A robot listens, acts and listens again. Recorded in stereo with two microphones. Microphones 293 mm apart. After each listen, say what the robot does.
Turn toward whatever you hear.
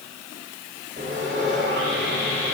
Turn 40° right.
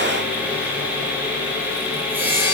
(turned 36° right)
Facing the sawing, 2 to 4 m away.